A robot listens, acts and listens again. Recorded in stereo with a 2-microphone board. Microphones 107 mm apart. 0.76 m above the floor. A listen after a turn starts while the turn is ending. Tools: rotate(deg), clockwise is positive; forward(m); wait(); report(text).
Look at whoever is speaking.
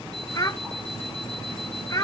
rotate(-30)
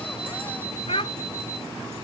rotate(-120)
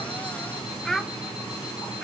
report("Facing the child speaking.")